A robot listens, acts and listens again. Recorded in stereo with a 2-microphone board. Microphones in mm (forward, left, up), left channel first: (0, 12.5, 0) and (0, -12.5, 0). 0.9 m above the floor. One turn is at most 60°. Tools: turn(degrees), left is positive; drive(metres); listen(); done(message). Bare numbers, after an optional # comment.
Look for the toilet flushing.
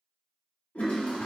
# The toilet flushing: about 60° left or 120° left.
turn(60)
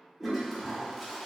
done("Facing the toilet flushing.")